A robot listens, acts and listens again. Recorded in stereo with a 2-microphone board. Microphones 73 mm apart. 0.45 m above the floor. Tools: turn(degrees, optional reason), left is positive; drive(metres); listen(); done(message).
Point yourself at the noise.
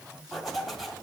turn(degrees=30)
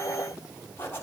turn(degrees=150, reason="So it is at 150° left.")
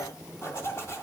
turn(degrees=40, reason="The zipper is now 40° left.")
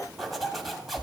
done("Facing the zipper.")